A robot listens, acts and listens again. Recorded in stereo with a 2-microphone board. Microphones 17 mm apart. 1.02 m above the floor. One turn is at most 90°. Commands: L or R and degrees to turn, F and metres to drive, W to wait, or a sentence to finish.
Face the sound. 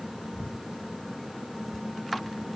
W
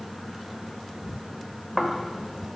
R30
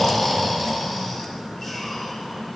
L20
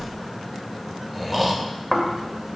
Found it: snoring, straight ahead.